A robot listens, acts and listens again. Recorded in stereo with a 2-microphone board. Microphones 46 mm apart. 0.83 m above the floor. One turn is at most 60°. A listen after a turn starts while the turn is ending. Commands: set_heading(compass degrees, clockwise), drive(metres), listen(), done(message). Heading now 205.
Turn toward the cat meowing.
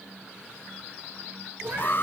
set_heading(250)
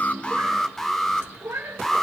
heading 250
set_heading(310)
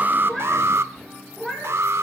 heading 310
set_heading(295)
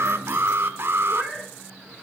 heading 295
set_heading(285)
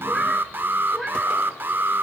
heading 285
done("Facing the cat meowing.")